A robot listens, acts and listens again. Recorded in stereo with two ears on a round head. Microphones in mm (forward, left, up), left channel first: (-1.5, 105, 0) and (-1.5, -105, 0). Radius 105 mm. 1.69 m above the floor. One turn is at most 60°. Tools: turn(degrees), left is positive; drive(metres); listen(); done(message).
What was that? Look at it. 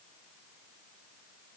listen()
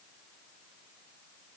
listen()
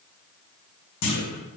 turn(degrees=60)
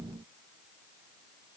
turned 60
turn(degrees=30)
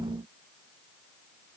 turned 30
done("I heard a clunk from this way, but can't make it out now.")